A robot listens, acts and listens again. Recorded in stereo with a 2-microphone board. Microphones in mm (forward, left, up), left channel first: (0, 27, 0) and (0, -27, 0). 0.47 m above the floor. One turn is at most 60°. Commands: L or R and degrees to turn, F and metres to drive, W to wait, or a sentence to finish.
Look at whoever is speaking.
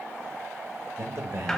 R50
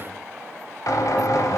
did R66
W
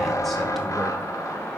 W
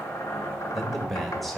Facing the man speaking.